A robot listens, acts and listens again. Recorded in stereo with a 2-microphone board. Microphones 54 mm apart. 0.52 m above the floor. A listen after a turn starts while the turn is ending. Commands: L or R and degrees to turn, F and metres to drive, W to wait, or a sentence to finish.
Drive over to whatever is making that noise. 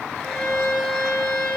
L30
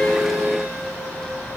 W
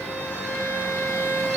L150
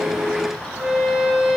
F1.0
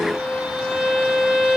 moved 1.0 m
F1.0
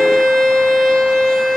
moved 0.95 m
F1.0
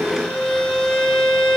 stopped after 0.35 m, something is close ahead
L10
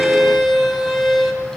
I am next to the violin.